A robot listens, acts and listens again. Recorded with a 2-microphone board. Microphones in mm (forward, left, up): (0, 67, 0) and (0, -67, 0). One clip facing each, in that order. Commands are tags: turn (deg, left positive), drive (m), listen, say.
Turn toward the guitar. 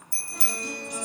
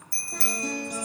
<turn deg="-45"/>
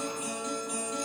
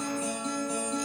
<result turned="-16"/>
<turn deg="-30"/>
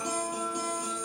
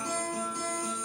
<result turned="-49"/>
<turn deg="20"/>
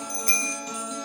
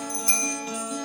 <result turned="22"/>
<say>Found it: a guitar, straight ahead.</say>